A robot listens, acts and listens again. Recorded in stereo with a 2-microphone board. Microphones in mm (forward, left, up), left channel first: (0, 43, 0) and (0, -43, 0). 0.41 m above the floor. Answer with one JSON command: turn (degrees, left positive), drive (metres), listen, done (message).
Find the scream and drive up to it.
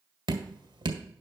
{"listen": true}
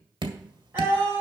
{"turn": -25}
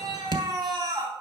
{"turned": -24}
{"turn": -130}
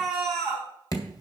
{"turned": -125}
{"drive": 1.0}
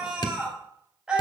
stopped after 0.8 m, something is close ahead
{"turn": -10}
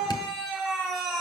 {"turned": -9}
{"done": "Blocked. The scream is further on, straight ahead."}